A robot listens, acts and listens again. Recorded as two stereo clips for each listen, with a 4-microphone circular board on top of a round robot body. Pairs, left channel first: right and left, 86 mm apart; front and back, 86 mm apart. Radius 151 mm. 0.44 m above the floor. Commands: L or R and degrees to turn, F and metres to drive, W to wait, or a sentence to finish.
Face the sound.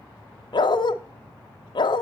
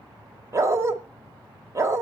R125
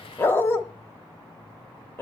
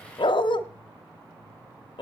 R25
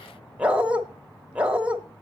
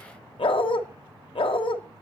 L10
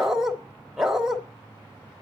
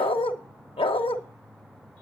Facing the dog barking.